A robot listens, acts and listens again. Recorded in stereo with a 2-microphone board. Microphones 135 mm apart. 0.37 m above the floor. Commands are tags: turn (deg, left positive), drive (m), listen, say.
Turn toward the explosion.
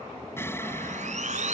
<turn deg="20"/>
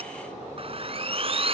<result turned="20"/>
<listen/>
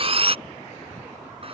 <say>I heard an explosion, but can't make it out now. It was about straight ahead or 140° left.</say>